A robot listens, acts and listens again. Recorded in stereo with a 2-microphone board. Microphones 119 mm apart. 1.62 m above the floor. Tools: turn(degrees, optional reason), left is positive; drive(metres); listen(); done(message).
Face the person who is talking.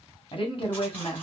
turn(degrees=45, reason="The woman speaking: about 45° left or 135° left.")
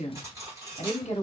turn(degrees=85, reason="So it is at 85° left.")
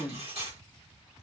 turn(degrees=10, reason="The woman speaking is now 10° left.")
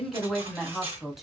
done("Facing the woman speaking.")